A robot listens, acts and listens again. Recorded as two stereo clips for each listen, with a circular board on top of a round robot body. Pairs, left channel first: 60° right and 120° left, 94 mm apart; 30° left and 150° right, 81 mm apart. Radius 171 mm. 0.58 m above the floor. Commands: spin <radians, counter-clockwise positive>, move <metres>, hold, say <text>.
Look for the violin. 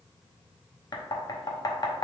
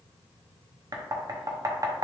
hold
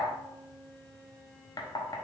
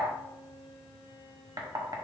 spin 0.35
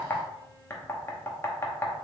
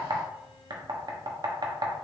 hold
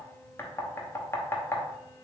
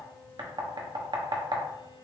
hold
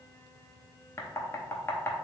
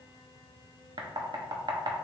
say Facing where the violin came from. I can't hear it now.